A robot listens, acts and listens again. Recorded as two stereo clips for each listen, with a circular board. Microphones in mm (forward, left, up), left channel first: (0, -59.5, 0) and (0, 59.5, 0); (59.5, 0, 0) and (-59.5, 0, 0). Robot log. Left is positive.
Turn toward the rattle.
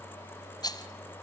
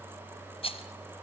note: The rattle: 35° right.
cmd yaw -35
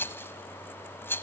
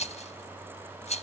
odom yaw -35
note: The rattle is now 20° right.
cmd yaw -20
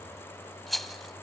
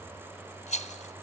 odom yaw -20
end: Found it: a rattle, straight ahead.